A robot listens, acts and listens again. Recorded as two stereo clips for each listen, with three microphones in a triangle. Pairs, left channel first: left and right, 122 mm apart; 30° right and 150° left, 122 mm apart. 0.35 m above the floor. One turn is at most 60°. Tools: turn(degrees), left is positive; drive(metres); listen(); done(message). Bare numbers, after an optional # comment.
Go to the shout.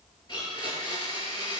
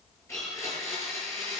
listen()
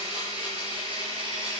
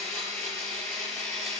listen()
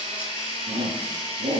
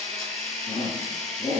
# The shout: 70° right.
turn(-60)
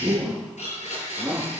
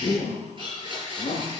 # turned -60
drive(1.0)
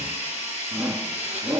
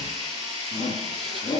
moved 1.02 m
# The shout is now 10° right.
turn(-10)
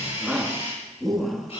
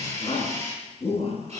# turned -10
drive(1.0)
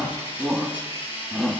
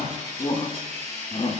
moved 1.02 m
drive(1.0)
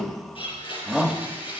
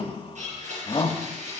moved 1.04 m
drive(1.0)
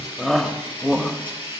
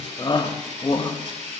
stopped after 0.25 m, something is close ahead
done("I am next to the shout.")